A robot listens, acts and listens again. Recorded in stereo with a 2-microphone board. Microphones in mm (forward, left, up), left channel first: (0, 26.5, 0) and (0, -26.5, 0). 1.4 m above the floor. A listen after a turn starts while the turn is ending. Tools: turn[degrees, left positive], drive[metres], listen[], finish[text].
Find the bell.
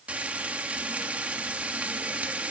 Action: listen[]
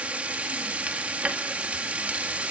Action: listen[]
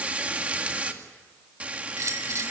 Action: turn[-90]
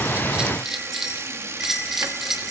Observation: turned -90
Action: finish[Facing the bell, 2 to 4 m away.]